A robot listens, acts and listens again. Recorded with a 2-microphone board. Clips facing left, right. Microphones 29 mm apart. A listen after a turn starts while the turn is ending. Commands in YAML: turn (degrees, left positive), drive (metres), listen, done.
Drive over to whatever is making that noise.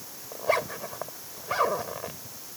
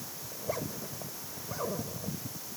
turn: 65
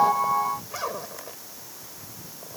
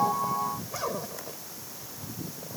turn: 20
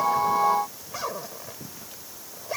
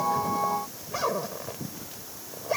drive: 1.0
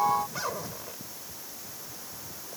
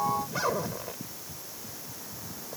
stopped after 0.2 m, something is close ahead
turn: -10
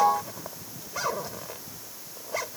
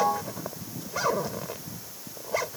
done: "Something is in my way. I am facing the zipper but have not reached it."